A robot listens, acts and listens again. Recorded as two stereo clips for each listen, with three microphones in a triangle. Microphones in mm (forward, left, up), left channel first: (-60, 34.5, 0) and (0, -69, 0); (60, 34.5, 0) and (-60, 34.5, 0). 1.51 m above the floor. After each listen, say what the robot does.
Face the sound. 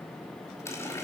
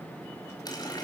Turn 55° left.
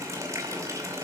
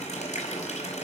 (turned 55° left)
Found it: a running tap, straight ahead, over 4 m away.